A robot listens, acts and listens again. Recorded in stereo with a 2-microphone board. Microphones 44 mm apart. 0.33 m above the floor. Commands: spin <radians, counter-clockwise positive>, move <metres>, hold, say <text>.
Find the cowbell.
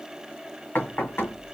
hold
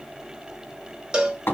spin -0.35
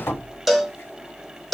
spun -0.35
say Facing the cowbell.